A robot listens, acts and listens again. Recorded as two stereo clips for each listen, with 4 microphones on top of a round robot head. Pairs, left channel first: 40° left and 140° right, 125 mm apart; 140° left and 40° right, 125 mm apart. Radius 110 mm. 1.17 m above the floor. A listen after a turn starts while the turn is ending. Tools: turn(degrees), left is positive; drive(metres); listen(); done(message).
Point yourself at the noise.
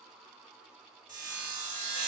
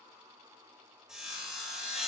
turn(degrees=-125)
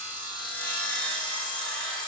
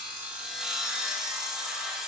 turn(degrees=45)
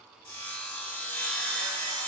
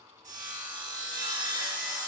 turn(degrees=-30)
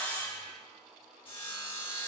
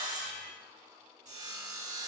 turn(degrees=-10)
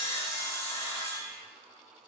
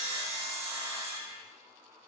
done("Found it: sawing, straight ahead.")